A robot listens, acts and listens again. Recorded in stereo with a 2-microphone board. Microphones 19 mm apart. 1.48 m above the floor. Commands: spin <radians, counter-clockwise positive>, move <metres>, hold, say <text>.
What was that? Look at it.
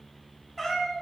spin 0.35
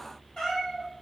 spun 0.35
spin 2.36
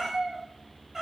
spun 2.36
spin -0.35
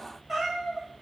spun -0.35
spin -0.17
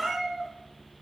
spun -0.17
say Facing the cat meowing.